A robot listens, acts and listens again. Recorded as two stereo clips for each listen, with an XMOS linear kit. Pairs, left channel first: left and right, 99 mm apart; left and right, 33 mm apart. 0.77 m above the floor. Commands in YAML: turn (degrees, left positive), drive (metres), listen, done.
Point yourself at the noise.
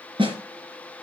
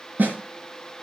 turn: -60
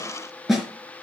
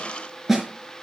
done: "Found it: a snare drum, straight ahead."